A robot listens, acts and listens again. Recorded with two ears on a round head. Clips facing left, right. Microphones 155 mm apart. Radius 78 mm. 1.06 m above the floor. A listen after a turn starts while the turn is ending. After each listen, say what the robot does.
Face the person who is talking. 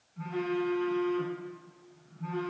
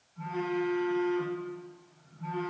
Keep listening.
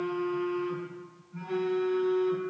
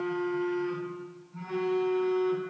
Keep listening.
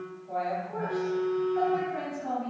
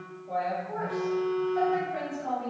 Turn 90° right.
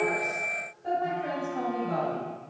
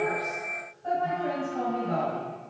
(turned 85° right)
Turn 10° left.
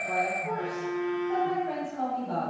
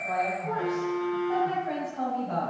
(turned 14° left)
Found it: a woman speaking, straight ahead, over 4 m away.